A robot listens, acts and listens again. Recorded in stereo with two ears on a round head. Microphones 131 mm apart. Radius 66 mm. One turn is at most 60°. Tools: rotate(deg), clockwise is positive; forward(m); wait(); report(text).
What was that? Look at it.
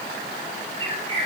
rotate(35)
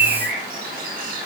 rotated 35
rotate(60)
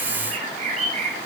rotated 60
rotate(50)
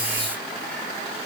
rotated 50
wait()
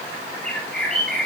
report("Found it: a bird, straight ahead, over 4 m away.")